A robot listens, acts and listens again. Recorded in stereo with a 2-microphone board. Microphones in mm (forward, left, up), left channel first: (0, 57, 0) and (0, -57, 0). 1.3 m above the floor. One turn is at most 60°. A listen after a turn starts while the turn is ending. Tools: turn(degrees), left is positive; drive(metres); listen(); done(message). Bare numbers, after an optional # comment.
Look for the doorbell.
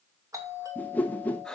# The doorbell: about 30° right or 150° right.
turn(-30)
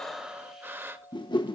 done("Found it: a doorbell, straight ahead, 2 to 4 m away.")